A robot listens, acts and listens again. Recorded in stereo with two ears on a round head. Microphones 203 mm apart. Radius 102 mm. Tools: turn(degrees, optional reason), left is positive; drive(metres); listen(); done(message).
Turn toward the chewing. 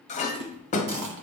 turn(degrees=-90)
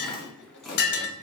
done("Found it: chewing, straight ahead, 1 to 2 m away.")